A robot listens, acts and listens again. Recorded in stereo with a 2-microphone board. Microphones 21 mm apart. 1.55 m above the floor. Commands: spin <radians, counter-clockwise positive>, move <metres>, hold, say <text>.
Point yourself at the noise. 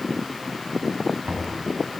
spin -1.57
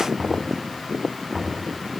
say Facing the knocking, over 4 m away.